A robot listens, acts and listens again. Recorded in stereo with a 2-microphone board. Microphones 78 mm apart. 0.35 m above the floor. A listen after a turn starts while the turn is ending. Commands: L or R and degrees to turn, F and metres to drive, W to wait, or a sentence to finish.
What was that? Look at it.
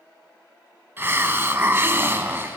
R30
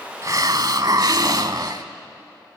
R120
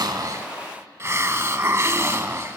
R35
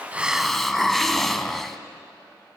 Facing the hiss.